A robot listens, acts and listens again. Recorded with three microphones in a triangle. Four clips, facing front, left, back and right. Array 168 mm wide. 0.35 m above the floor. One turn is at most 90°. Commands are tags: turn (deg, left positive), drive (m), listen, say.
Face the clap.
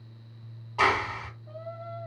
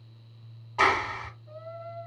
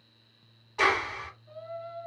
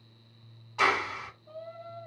<turn deg="55"/>
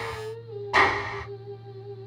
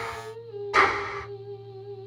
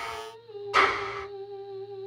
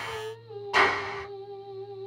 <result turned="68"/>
<turn deg="-15"/>
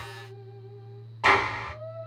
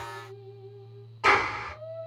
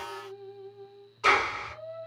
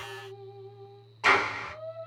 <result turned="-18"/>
<say>Facing the clap.</say>